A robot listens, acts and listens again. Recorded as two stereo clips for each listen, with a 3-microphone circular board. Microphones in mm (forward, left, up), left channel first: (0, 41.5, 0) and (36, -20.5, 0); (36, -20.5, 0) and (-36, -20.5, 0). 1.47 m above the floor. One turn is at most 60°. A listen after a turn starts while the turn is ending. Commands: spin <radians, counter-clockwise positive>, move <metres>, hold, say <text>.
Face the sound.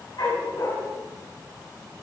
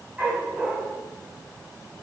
spin 1.05
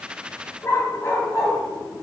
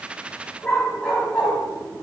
spin 1.05
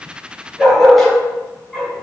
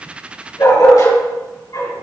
spin 0.52
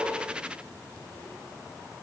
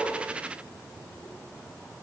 hold
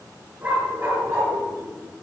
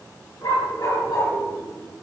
say Found it: a dog barking, straight ahead.